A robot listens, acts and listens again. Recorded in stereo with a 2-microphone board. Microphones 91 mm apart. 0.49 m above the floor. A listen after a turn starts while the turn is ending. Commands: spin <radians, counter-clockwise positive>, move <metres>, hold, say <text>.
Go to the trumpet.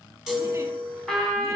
spin 0.52
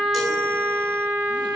spin -0.44
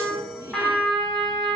move 1.0
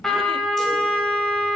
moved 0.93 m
move 1.0
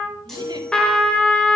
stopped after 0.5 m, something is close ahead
spin 0.17
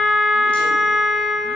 say Arrived at the trumpet, straight ahead.